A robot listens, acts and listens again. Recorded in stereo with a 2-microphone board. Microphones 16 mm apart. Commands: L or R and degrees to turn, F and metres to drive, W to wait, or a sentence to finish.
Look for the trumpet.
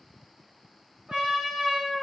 R60
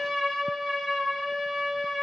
R20
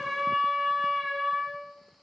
Facing the trumpet, 1 to 2 m away.